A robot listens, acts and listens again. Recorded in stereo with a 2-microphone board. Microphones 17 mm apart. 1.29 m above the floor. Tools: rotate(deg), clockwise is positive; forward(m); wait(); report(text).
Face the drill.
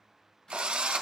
rotate(65)
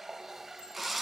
report("Facing the drill, under 1 m away.")